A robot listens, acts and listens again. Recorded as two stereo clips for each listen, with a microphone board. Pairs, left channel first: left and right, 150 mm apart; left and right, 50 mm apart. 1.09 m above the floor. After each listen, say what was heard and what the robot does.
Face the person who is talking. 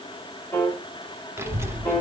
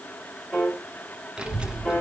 The child speaking: about 20° right or 160° right. Turn 20° right.
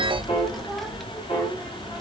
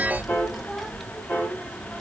Facing the child speaking, 1 to 2 m away.